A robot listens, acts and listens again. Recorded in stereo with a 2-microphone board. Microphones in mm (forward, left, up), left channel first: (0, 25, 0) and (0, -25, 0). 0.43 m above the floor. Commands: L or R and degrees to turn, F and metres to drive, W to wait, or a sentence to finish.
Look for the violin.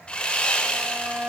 R30
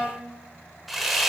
Found it: a violin, straight ahead, 1 to 2 m away.